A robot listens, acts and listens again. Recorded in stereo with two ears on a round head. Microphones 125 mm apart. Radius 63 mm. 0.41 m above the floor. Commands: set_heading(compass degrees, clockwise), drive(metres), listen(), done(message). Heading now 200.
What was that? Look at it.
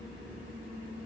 listen()
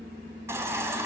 set_heading(220)
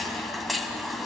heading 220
done("Facing the baby crying.")